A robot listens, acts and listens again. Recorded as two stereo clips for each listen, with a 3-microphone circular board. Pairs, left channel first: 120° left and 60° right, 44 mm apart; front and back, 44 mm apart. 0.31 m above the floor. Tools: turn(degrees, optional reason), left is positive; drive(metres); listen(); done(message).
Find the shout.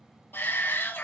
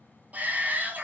turn(degrees=135, reason="The shout: 135° left.")
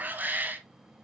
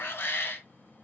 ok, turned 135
turn(degrees=-20, reason="The shout is now 20° right.")
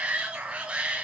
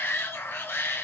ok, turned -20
done("Facing the shout.")